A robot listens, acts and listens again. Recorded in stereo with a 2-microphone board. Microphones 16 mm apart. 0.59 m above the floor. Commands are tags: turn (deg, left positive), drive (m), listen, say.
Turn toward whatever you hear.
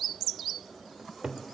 <turn deg="-55"/>
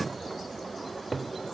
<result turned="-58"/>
<turn deg="-10"/>
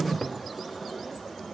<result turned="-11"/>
<say>Facing the cupboard door.</say>